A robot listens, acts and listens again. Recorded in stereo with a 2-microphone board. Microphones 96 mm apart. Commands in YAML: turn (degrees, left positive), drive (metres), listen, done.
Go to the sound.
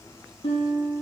turn: 90
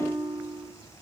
drive: 1.0
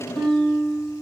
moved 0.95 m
drive: 1.0
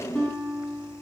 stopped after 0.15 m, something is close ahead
done: "Something is in my way. I am facing the guitar but have not reached it."